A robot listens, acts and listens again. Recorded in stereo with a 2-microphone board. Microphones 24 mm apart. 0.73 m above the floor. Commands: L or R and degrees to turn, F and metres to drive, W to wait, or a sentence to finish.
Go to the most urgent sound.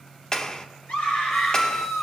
L70
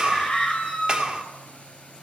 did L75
L30
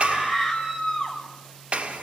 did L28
F1.0
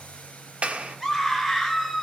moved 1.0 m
F1.0
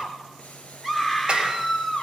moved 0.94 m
R10
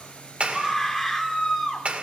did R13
F1.0
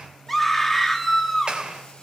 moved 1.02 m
F1.0
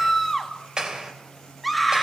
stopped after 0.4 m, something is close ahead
Arrived at the scream, straight ahead.